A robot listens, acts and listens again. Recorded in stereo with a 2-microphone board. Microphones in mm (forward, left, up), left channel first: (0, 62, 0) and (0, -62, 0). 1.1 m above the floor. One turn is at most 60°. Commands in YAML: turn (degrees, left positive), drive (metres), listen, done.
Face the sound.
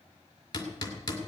turn: 30
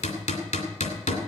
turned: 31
turn: 60
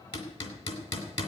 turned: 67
turn: 50
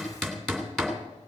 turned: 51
done: "Found it: hammering, straight ahead."